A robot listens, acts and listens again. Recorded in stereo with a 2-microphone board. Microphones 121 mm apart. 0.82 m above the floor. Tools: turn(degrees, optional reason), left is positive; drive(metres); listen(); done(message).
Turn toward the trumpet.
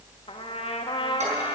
turn(degrees=50, reason="The trumpet: about 50° left or 130° left.")
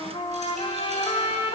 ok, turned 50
turn(degrees=65, reason="So it is at 65° left.")
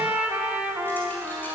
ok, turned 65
turn(degrees=-10, reason="The trumpet is now 10° right.")
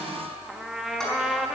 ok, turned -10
done("Facing the trumpet, 1 to 2 m away.")